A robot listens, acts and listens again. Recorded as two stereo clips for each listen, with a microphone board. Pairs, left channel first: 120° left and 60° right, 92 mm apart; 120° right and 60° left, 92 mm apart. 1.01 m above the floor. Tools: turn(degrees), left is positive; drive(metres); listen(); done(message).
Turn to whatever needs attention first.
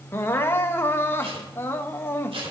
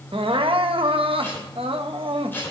turn(degrees=55)
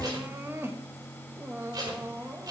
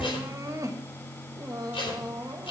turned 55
done("Found it: crying, straight ahead.")